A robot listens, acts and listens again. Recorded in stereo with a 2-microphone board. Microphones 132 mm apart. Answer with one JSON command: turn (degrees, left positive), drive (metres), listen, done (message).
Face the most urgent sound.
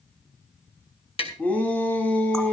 {"turn": 30}
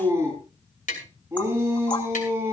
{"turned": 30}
{"turn": -20}
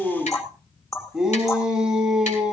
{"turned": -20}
{"done": "Facing the shout, 2 to 4 m away."}